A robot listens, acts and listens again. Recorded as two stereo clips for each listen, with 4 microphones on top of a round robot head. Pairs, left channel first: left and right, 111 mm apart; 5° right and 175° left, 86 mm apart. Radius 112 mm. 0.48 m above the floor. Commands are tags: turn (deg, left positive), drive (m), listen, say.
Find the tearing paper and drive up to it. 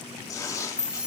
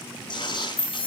<turn deg="25"/>
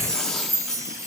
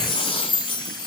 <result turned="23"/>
<listen/>
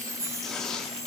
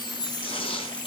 <drive m="1.0"/>
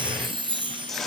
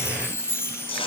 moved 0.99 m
<drive m="1.0"/>
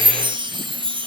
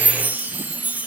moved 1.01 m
<listen/>
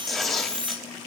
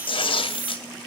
<drive m="1.0"/>
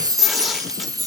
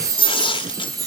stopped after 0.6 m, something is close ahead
<say>Arrived at the tearing paper, straight ahead.</say>